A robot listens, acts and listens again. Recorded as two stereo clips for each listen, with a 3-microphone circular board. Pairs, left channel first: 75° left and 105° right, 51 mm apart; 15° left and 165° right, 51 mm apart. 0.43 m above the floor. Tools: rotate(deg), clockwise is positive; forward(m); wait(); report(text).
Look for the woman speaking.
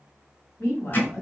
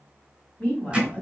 rotate(-70)
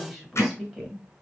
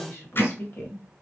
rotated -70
rotate(20)
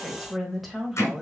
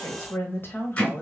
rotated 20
rotate(25)
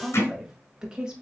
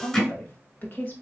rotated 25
rotate(35)
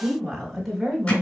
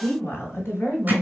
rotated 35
report("Facing the woman speaking.")